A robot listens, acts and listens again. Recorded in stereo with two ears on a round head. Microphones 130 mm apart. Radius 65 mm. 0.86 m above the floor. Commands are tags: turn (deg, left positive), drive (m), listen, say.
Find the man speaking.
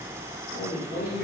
<turn deg="50"/>
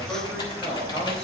<listen/>
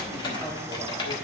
<listen/>
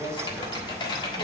<say>I heard a man speaking, but can't make it out now. It was about straight ahead or 80° left.</say>